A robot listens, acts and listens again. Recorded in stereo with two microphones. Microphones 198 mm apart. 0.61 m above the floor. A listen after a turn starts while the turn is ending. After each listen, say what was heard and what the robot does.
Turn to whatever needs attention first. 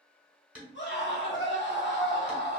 The scream: about 65° left or 115° left. Turn 65° left.
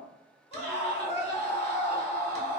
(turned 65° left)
So it is at 30° left. Turn 30° left.
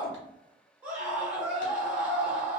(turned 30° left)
The scream is now 10° right. Turn 10° right.
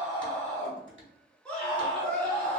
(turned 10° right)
Found it: a scream, straight ahead.